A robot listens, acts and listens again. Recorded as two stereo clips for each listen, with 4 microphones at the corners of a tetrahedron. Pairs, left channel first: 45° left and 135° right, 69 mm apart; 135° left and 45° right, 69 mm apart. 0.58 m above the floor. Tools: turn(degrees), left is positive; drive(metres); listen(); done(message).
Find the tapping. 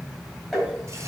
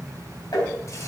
turn(degrees=135)
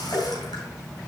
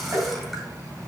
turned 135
done("Facing the tapping, 2 to 4 m away.")